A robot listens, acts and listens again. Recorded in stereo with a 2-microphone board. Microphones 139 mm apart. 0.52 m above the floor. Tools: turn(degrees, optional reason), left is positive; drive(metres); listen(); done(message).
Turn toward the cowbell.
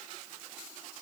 listen()
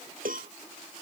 turn(degrees=-90)
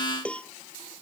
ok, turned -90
turn(degrees=10, reason="So it is at 10° left.")
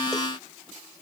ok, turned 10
listen()
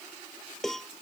done("Facing the cowbell.")